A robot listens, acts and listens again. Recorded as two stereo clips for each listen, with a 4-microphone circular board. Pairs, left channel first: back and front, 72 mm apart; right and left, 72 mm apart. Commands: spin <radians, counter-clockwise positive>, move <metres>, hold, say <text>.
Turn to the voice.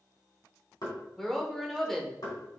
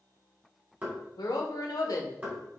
spin -1.57
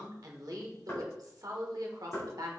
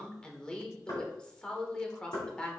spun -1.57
spin -0.26
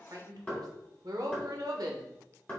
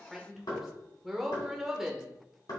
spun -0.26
say Found it: a woman speaking, straight ahead, 1 to 2 m away.